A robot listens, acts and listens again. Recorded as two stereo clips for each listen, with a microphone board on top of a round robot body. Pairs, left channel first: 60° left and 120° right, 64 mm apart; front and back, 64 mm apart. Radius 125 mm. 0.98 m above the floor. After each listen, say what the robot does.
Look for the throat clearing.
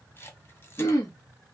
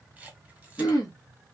Turn 25° left.
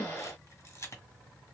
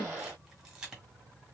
Turn 10° left.
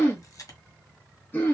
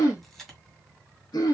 Found it: throat clearing, straight ahead.